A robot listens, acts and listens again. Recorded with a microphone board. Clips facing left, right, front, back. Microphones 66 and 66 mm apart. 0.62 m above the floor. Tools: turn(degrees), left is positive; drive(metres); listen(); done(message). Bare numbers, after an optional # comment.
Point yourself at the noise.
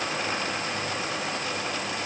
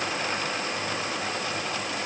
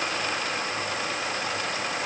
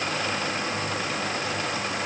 listen()
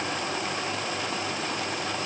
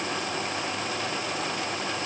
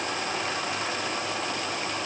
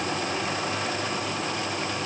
listen()
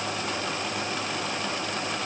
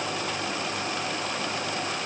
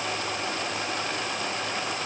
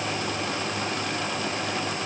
done("I can't make out anything.")